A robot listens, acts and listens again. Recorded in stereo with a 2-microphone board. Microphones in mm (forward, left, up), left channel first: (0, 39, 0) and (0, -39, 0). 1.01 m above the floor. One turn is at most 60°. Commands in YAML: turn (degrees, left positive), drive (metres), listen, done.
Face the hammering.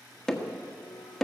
turn: 30
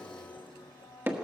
turn: -25
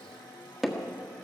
done: "Found it: hammering, straight ahead."